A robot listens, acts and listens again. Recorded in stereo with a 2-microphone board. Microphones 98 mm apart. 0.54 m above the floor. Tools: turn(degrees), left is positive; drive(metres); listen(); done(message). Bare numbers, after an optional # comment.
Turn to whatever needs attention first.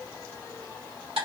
listen()
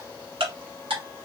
listen()
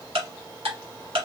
done("I can't make out anything urgent to turn to.")